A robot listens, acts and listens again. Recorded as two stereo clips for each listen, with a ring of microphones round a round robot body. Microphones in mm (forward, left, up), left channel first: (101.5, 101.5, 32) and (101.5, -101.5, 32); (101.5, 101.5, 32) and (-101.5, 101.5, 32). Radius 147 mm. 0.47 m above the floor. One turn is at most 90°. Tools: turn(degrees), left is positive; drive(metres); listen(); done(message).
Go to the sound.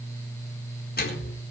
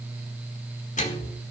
turn(degrees=50)
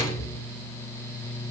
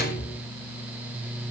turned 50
turn(degrees=20)
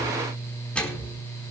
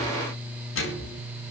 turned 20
drive(metres=1.0)
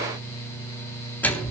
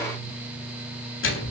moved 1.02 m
turn(degrees=10)
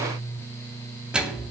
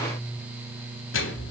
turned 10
drive(metres=1.0)
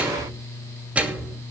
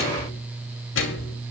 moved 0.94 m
drive(metres=1.0)
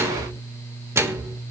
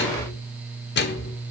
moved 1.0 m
turn(degrees=-15)
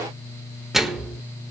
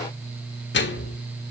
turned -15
drive(metres=1.0)
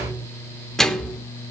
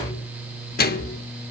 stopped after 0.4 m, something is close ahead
done("Arrived at the microwave, straight ahead.")